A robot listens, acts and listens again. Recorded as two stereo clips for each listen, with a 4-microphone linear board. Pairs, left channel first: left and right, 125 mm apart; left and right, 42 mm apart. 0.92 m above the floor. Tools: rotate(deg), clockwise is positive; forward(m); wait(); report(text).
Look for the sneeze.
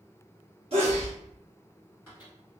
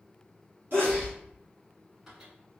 rotate(55)
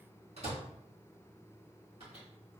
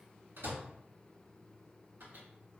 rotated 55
wait()
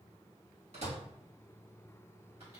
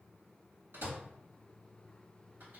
report("I heard a sneeze, but can't make it out now. It was about straight ahead or 70° right.")